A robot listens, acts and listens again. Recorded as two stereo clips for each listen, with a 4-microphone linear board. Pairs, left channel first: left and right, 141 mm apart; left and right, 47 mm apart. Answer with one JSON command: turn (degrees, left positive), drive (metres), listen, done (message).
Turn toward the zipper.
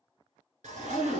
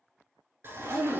{"turn": -65}
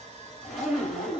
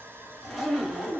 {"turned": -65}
{"done": "Found it: a zipper, straight ahead, 1 to 2 m away."}